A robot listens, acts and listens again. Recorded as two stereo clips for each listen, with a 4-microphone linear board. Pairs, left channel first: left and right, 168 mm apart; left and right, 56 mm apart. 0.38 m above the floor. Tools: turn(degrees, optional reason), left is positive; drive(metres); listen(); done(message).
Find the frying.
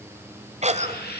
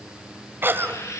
turn(degrees=70, reason="The frying: about 70° left or 110° left.")
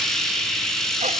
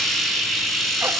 done("Facing the frying, over 4 m away.")